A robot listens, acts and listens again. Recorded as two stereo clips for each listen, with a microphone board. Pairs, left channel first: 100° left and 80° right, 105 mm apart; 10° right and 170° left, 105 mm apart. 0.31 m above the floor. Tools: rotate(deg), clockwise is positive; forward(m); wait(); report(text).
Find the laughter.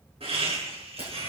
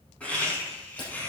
rotate(85)
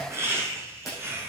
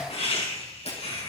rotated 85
rotate(10)
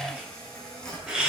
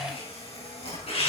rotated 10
report("Facing the laughter.")